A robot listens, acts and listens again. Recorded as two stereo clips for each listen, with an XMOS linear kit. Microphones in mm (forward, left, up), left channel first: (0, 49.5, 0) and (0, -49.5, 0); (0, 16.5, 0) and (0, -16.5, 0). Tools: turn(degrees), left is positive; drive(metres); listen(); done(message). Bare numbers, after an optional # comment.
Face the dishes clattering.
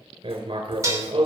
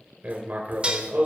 # The dishes clattering: about 35° right or 145° right.
turn(-35)
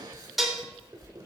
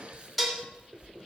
done("Found it: dishes clattering, straight ahead.")